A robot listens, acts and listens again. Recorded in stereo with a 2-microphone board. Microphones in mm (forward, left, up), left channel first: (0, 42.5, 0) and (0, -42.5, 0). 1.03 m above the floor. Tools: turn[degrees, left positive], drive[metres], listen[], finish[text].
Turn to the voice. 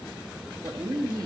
Thought: The woman speaking: about 50° right or 130° right.
Action: turn[-50]
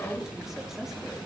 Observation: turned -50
Action: listen[]
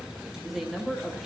Action: finish[Facing the woman speaking.]